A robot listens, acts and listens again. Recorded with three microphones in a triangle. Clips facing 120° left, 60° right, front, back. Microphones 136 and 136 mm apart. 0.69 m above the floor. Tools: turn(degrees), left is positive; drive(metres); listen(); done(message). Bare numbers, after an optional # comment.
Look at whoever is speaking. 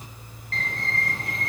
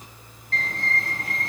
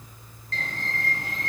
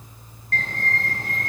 listen()
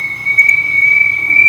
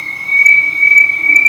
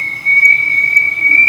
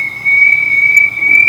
listen()
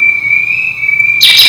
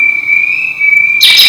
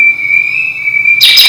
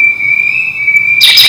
done("I can't make out anyone speaking to turn to.")